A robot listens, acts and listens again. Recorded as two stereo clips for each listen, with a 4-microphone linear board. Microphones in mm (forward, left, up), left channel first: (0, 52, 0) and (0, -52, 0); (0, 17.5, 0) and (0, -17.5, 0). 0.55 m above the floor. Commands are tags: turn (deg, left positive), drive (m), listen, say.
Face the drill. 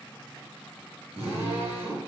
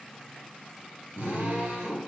<turn deg="-90"/>
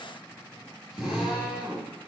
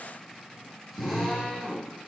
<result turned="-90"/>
<say>Facing the drill.</say>